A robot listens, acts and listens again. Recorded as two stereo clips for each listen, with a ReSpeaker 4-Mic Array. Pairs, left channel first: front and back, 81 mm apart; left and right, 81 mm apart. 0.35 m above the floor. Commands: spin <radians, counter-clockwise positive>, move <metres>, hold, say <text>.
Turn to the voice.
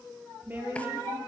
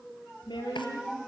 spin 2.01
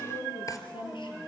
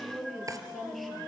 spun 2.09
say Found it: a woman speaking, straight ahead.